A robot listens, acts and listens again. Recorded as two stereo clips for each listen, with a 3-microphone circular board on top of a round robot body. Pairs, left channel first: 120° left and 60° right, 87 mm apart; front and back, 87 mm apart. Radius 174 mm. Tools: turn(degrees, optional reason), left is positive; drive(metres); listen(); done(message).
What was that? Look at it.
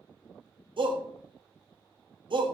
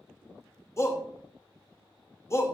turn(degrees=-55, reason="The shout: 55° right.")
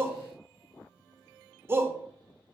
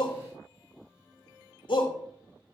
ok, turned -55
done("Facing the shout, 1 to 2 m away.")